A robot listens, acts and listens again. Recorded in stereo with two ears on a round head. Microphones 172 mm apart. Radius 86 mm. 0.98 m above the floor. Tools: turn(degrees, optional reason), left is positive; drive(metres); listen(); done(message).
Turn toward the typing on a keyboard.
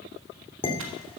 turn(degrees=-90)
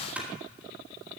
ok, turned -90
done("Found it: typing on a keyboard, straight ahead, 2 to 4 m away.")